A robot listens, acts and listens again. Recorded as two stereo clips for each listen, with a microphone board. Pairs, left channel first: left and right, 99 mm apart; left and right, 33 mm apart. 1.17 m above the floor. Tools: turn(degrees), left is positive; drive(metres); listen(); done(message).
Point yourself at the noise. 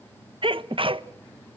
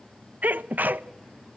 turn(degrees=-60)
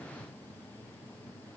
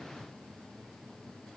listen()
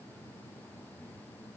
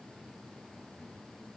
done("I heard a sneeze, but can't make it out now. It was about straight ahead or 60° right.")